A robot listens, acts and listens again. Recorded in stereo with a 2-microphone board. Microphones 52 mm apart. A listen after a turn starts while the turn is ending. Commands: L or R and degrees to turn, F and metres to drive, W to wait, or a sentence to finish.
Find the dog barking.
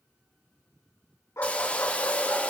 L70
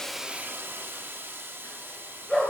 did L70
L10
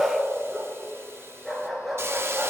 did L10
Found it: a dog barking, straight ahead.